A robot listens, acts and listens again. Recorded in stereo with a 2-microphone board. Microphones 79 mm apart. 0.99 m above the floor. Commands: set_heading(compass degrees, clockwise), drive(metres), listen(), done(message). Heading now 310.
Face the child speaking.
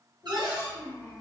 set_heading(245)
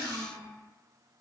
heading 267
set_heading(227)
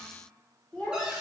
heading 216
set_heading(201)
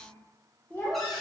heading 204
set_heading(179)
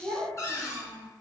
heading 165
set_heading(175)
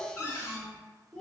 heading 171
done("Found it: a child speaking, straight ahead.")